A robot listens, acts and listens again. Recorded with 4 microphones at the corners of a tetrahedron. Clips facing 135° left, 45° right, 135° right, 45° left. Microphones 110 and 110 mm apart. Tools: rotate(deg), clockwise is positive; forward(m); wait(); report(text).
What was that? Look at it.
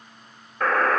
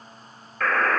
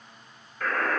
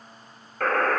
rotate(-65)
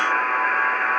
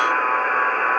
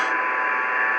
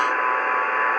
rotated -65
report("Found it: a buzzer, straight ahead, 2 to 4 m away.")